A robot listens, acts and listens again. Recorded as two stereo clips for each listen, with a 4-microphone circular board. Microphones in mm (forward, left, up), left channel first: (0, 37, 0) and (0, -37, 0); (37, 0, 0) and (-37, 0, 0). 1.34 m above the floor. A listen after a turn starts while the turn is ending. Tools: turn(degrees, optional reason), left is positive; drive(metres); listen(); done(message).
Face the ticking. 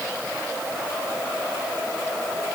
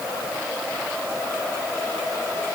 listen()
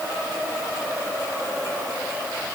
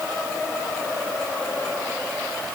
listen()
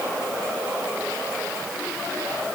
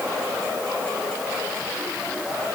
done("I can't make out ticking.")